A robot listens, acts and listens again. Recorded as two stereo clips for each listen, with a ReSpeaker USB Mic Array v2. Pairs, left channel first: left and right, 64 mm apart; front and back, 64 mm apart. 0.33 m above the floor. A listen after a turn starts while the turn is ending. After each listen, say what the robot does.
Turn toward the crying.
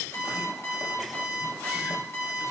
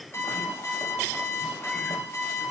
Keep listening.
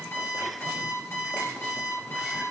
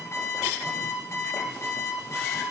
Keep listening.
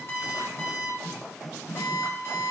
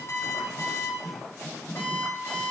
I can't make out crying, only an alarm clock.